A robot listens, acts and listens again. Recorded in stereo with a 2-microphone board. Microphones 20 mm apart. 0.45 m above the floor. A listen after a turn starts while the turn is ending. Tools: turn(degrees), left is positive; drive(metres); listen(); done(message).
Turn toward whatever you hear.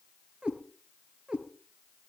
turn(degrees=-45)
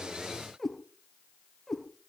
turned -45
turn(degrees=15)
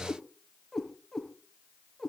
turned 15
turn(degrees=10)
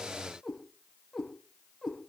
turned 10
done("Found it: a cat meowing, straight ahead, over 4 m away.")